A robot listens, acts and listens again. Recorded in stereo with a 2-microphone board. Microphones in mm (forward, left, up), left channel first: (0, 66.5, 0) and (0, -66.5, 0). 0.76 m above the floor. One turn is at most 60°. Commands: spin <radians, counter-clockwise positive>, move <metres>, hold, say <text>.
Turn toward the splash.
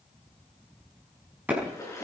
spin 0.44
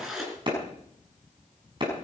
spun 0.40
say Found it: a splash, straight ahead.